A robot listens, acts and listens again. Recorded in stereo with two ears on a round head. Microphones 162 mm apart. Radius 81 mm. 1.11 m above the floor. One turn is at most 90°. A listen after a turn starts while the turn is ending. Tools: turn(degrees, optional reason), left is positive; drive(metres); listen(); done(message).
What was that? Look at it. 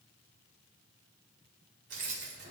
turn(degrees=-60, reason="The keys jangling: about 60° right or 120° right.")
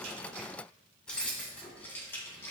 turn(degrees=15, reason="So it is at 15° left.")
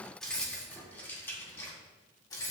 turn(degrees=20, reason="The keys jangling is now 20° left.")
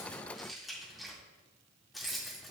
done("Found it: keys jangling, straight ahead, 1 to 2 m away.")